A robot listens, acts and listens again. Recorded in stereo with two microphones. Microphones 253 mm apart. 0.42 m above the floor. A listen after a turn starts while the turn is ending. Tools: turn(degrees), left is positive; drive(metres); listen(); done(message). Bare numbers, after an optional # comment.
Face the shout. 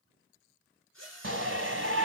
# The shout: about 50° right or 130° right.
turn(-50)
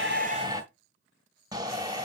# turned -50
# So it is at 15° right.
turn(-15)
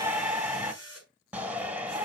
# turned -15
done("Facing the shout, 1 to 2 m away.")